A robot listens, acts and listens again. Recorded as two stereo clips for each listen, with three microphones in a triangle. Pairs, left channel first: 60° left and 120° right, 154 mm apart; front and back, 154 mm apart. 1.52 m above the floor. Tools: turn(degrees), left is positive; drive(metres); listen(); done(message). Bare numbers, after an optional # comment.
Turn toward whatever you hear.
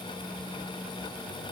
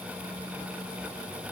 listen()
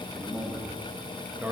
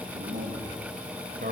# The man speaking: 160° left.
turn(160)
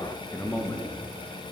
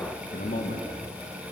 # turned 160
# The man speaking is now 15° right.
turn(-15)
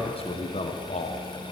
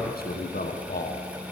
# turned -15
# The man speaking is now 20° left.
turn(20)
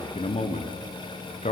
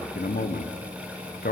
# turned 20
# The man speaking is now 15° left.
turn(15)
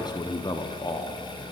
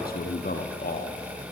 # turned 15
done("Facing the man speaking.")